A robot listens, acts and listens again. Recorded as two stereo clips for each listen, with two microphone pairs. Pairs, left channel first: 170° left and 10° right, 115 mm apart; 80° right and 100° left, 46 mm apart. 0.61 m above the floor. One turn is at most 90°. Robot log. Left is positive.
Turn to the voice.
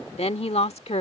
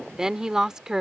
note: The woman speaking: 175° left.
cmd yaw +90
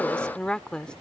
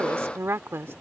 note: The woman speaking is now 90° left.
cmd yaw +90
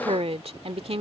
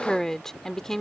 end: Found it: a woman speaking, straight ahead.